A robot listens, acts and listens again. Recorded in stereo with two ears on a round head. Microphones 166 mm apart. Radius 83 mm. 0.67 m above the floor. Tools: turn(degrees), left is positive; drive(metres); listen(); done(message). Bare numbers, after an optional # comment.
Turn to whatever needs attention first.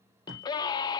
# The scream: about 20° left or 160° left.
turn(20)
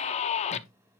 # So it is at 135° left.
turn(135)
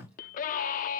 # The scream is now 55° left.
turn(55)
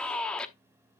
done("Facing the scream.")